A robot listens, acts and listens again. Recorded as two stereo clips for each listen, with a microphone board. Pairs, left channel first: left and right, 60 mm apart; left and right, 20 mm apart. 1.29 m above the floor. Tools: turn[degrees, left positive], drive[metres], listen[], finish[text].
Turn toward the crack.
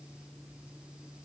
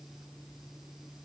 Action: listen[]
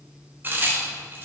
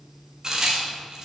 Thought: The crack: about 35° right or 145° right.
Action: turn[-35]
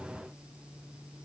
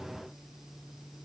Action: listen[]
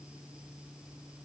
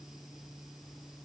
Action: finish[I heard a crack, but can't make it out now. It was about straight ahead or 110° right.]